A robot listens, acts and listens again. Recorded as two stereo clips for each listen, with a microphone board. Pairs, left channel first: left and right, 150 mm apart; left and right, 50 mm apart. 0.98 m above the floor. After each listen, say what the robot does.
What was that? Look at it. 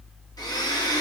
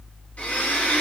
Turn 25° left.
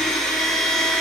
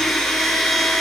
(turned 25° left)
Facing the blender.